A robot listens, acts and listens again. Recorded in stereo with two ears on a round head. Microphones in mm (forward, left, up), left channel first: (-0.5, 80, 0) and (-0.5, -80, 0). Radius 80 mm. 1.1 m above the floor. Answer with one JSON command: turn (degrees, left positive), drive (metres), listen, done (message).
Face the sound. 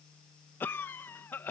{"turn": 30}
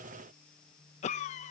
{"turn": 135}
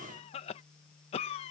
{"turn": 40}
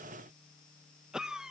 {"done": "Facing the cough."}